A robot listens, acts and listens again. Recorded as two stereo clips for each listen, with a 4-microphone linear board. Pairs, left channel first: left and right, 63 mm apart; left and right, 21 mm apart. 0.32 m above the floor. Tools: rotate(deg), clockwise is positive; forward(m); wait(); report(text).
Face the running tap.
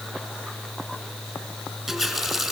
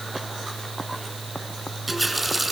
rotate(-30)
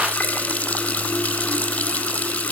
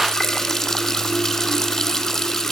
rotate(-150)
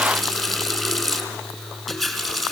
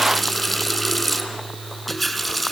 report("Facing the running tap.")